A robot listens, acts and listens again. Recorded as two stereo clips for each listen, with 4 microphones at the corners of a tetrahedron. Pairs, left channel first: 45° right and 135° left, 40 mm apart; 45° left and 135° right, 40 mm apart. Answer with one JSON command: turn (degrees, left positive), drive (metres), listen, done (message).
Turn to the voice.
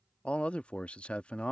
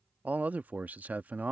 {"turn": -100}
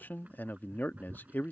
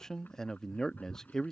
{"turn": -30}
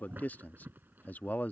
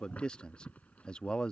{"turn": -15}
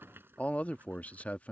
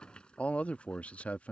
{"done": "Facing the man speaking."}